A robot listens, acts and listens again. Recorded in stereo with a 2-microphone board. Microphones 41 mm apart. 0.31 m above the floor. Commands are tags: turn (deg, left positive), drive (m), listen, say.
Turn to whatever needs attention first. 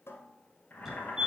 <turn deg="-30"/>
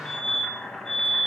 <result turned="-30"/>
<turn deg="15"/>
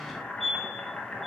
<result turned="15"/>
<say>Found it: a fire alarm, straight ahead, 2 to 4 m away.</say>